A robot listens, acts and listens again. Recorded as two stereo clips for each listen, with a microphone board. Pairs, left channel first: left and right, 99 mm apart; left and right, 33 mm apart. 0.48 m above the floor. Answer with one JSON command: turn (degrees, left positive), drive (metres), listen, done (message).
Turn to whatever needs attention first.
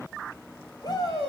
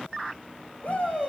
{"turn": 40}
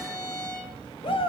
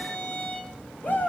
{"turn": 95}
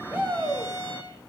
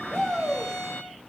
{"turn": -10}
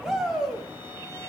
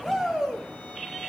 {"done": "Found it: a shout, straight ahead."}